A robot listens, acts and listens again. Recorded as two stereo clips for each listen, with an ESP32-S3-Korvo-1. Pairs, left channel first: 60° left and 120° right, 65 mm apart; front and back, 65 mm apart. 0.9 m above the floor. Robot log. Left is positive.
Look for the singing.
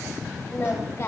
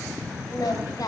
note: The singing: 20° left.
cmd yaw +20
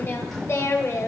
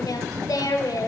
note: The singing is now 20° left.
cmd yaw +20
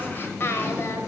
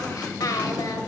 note: The singing is now 10° left.
cmd yaw +10
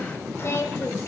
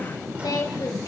note: The singing is now 20° left.
cmd yaw +20
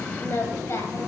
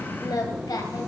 note: The singing is now 15° left.
cmd yaw +15
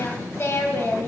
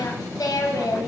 note: The singing is now 10° left.
cmd yaw +10
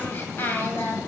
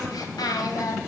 end: Found it: singing, straight ahead, 2 to 4 m away.